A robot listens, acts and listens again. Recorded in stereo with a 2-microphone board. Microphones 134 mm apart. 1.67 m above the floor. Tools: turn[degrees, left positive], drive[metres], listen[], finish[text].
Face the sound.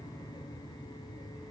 Action: listen[]
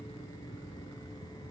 Action: listen[]
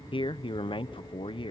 Thought: The man speaking: about 40° left or 140° left.
Action: turn[40]
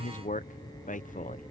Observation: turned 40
Thought: So it is at 105° left.
Action: turn[105]
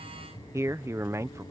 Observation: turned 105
Thought: The man speaking is now 20° right.
Action: turn[-20]
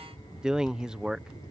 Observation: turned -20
Action: finish[Found it: a man speaking, straight ahead.]